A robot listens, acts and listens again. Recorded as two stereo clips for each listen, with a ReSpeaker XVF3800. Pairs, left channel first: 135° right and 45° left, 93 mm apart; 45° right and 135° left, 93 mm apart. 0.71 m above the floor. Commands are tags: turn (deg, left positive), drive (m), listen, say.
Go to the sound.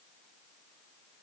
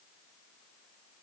<listen/>
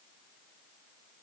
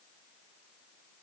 <listen/>
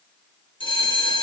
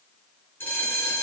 <turn deg="-115"/>
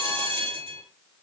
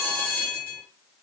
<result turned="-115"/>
<turn deg="25"/>
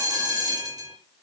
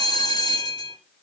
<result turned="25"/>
<drive m="1.0"/>
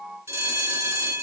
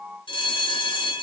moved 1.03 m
<turn deg="-20"/>
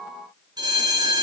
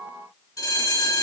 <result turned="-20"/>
<drive m="1.0"/>
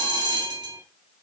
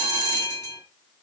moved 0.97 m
<turn deg="10"/>
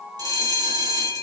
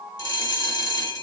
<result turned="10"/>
<drive m="1.0"/>
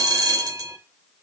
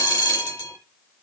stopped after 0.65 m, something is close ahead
<say>Arrived at the bell, straight ahead.</say>